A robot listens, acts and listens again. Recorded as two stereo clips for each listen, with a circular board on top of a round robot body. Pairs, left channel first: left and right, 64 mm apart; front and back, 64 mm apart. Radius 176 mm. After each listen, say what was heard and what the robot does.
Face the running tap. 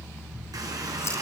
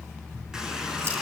The running tap: 100° right. Turn 100° right.
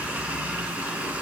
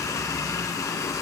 The running tap is now 25° right. Turn 25° right.
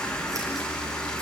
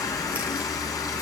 The running tap is now 15° left. Turn 15° left.
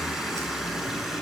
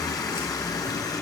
Found it: a running tap, straight ahead.